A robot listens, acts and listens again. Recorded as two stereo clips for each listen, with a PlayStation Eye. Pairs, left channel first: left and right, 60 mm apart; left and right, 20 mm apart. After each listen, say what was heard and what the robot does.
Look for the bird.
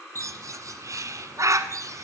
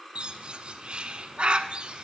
The bird: about 65° right or 115° right. Turn 65° right.
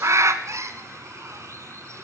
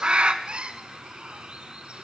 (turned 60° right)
So it is at 55° right. Turn 55° right.
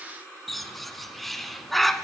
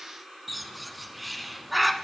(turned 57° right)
Facing the bird, under 1 m away.